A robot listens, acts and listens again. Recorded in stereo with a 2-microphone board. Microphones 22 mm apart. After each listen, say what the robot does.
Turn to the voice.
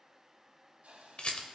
Keep listening.
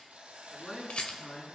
Turn 20° left.
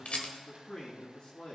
Turn 135° left.
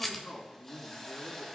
Turn 55° left.
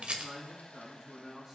Turn 15° right.
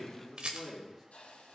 Found it: a man speaking, straight ahead, 2 to 4 m away.